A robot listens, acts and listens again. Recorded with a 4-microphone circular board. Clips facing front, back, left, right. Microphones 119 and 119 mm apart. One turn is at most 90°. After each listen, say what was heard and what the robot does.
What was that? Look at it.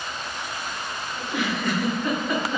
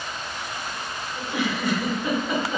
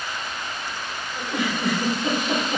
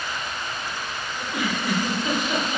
The giggle: 100° left. Turn 90° left.
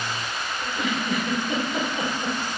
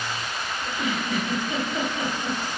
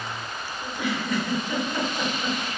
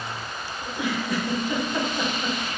The giggle is now 20° right. Turn 20° right.
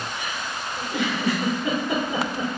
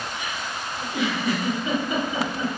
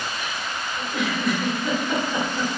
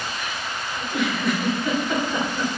Found it: a giggle, straight ahead.